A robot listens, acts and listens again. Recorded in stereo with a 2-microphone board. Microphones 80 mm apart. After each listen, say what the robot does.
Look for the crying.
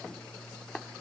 Keep listening.
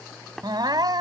Turn 60° right.
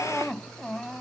Facing the crying.